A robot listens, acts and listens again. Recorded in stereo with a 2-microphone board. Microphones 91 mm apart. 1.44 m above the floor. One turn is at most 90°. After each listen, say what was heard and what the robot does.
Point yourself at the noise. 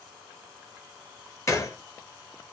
The gunshot: about 30° left or 150° left. Turn 30° left.
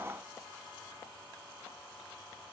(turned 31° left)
Keep listening.
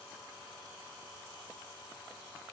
I heard a gunshot, but can't make it out now. It was about straight ahead or 115° left.